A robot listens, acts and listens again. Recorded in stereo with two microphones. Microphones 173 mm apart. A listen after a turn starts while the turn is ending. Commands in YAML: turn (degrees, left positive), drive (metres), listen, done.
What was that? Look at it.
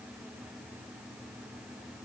listen: true
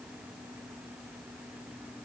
listen: true
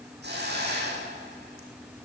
turn: -90
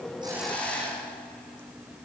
done: "Found it: a hiss, straight ahead, over 4 m away."